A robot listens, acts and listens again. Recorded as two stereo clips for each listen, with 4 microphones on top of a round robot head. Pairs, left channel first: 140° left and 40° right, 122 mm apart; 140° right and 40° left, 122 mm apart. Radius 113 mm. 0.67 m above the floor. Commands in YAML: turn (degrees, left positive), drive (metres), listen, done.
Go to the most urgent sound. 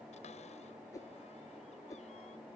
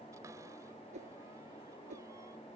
listen: true
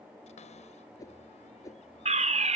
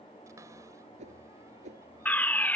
turn: -65
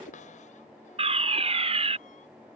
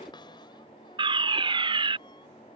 drive: 1.0
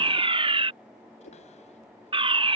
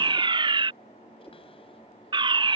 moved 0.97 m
drive: 1.0
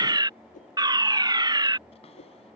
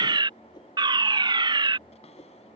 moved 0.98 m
drive: 1.0
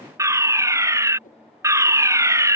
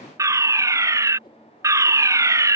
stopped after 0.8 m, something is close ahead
done: "Arrived at the fire alarm, straight ahead."